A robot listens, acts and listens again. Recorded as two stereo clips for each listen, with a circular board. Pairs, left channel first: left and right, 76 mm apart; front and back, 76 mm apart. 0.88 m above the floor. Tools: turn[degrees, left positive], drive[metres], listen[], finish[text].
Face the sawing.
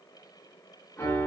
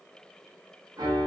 Action: listen[]
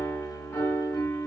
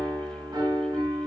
Action: listen[]
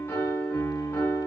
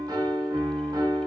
Action: finish[I can't make out sawing, only a piano.]